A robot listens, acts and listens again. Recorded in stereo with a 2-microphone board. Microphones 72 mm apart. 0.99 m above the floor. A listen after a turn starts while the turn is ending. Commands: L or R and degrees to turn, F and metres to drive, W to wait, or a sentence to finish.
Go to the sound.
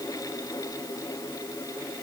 W
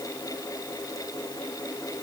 W
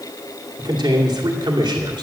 R75
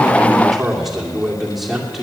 F1.0
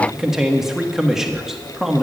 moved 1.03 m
F1.0
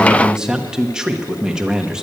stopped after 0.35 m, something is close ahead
R10
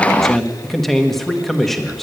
Arrived at the man speaking, straight ahead.